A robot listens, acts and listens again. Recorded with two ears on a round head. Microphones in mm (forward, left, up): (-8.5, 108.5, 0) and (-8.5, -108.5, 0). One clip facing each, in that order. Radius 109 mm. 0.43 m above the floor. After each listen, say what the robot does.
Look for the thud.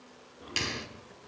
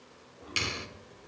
Turn 30° left.
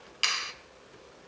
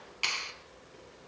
Keep listening.
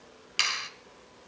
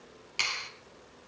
I heard a thud, but can't make it out now. It was about straight ahead or 120° left.